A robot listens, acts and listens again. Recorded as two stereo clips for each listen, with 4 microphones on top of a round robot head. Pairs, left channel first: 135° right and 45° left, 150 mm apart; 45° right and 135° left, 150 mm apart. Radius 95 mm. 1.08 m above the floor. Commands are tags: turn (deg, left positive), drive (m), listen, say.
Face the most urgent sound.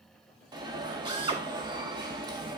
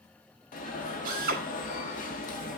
<turn deg="-15"/>
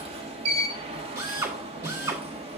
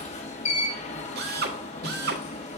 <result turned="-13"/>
<say>Facing the alarm, 1 to 2 m away.</say>